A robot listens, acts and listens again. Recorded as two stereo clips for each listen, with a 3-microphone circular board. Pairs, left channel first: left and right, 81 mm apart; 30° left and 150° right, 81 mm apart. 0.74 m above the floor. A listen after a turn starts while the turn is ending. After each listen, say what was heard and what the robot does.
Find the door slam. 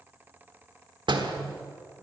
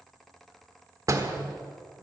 The door slam: 100° right. Turn 100° right.
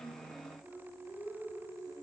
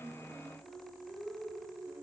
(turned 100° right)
Facing where the door slam came from. I can't hear it now.